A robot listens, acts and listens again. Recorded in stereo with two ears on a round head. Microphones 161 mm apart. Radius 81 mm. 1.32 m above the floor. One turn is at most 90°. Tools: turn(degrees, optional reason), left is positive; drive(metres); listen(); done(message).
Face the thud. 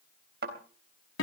turn(degrees=-65, reason="The thud: about 65° right or 115° right.")
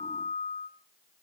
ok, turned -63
listen()
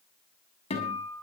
done("I heard a thud, but can't make it out now. It was about 5° right or 50° right.")